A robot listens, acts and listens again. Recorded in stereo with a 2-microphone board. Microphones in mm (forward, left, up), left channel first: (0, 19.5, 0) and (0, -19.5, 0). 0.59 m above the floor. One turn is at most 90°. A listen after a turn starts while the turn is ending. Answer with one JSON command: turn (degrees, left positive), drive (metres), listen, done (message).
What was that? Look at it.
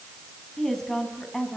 {"turn": 30}
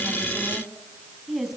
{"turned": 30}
{"done": "Facing the woman speaking, over 4 m away."}